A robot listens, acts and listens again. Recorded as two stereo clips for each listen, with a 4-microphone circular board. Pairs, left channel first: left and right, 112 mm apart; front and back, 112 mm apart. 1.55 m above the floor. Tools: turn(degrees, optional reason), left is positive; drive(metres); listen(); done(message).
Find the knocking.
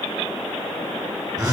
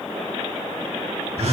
listen()
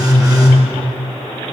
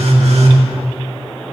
listen()
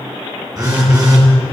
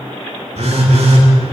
done("I can't make out knocking to turn to.")